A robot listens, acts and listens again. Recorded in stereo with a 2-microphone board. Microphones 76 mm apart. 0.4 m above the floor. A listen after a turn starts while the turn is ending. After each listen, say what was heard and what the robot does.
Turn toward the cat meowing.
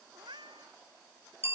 Turn 90° right.
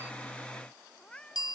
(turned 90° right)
So it is at 10° left. Turn 10° left.
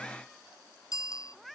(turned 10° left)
Facing the cat meowing.